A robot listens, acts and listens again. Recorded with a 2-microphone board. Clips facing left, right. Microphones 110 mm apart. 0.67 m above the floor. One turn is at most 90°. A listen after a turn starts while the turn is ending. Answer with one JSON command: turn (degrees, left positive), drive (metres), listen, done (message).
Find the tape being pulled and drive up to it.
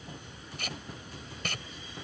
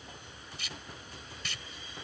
{"turn": 55}
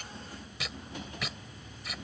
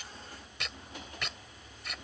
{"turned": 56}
{"drive": 1.0}
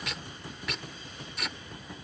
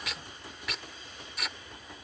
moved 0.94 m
{"drive": 1.0}
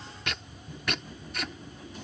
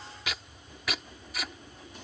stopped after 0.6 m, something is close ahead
{"done": "Arrived at the tape being pulled, straight ahead."}